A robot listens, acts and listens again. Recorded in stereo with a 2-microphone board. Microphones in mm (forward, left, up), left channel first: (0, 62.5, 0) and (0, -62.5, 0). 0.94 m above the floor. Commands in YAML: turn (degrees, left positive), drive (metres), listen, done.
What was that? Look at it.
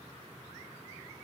listen: true
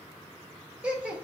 turn: -30
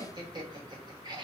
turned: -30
turn: -140
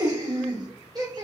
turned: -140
turn: -40
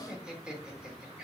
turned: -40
turn: -10
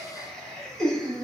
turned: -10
done: "Facing the laughter, 1 to 2 m away."